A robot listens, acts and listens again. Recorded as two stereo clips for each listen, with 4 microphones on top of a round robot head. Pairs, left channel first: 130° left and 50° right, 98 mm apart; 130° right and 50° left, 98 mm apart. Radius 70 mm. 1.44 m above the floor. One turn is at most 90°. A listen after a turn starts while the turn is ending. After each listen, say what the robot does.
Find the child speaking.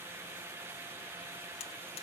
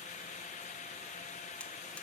Keep listening.
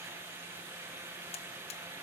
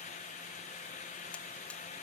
Keep listening.
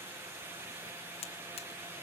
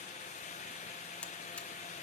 I can't make out a child speaking to turn to.